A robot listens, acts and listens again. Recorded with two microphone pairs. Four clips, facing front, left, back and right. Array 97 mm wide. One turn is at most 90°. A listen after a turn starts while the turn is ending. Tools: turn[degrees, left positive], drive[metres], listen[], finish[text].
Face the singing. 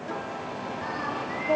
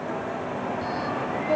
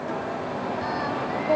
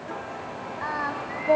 Thought: The singing: 100° right.
Action: turn[-90]
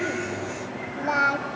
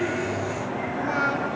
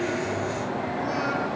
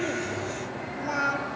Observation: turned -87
Action: finish[Found it: singing, straight ahead.]